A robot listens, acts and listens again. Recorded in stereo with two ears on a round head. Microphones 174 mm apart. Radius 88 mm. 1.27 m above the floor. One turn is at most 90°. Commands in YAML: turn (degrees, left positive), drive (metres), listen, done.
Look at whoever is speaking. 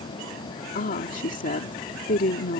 turn: 40
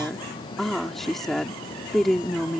done: "Found it: a woman speaking, straight ahead."